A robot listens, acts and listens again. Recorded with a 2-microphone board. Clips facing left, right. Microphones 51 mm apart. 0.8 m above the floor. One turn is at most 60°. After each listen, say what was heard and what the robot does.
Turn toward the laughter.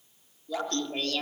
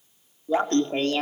The laughter: about 30° right or 150° right. Turn 30° right.
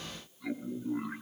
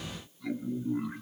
So it is at 15° left. Turn 15° left.
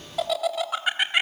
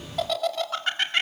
The laughter is now 15° left. Turn 15° left.
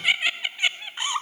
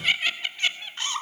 The laughter is now 20° left. Turn 20° left.
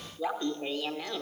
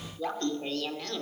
The laughter is now 10° left. Turn 10° left.
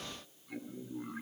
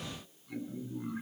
Facing the laughter, 2 to 4 m away.